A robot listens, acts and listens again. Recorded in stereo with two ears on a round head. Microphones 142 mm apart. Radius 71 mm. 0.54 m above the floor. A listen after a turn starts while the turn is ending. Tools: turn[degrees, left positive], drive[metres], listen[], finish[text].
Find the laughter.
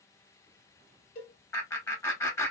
Thought: The laughter: about 15° left or 165° left.
Action: turn[15]
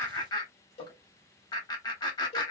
Thought: So it is at 150° left.
Action: turn[150]
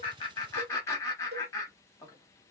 Thought: The laughter is now 20° left.
Action: turn[20]
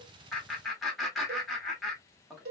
Action: finish[Found it: laughter, straight ahead, 1 to 2 m away.]